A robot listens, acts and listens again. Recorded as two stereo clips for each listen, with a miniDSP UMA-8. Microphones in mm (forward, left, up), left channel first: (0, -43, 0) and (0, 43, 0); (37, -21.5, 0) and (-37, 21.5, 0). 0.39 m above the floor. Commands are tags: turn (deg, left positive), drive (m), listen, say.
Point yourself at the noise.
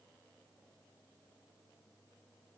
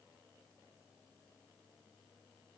<listen/>
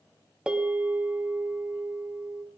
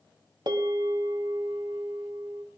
<turn deg="170"/>
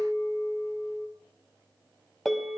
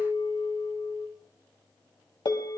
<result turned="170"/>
<say>Found it: a bell, straight ahead, 2 to 4 m away.</say>